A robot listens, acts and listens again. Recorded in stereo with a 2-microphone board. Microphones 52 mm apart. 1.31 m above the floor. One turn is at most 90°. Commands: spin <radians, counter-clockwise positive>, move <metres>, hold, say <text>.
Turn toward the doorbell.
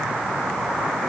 hold
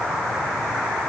hold
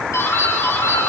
spin 1.57
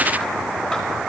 hold
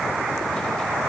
hold
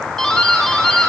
say Found it: a doorbell, straight ahead, over 4 m away.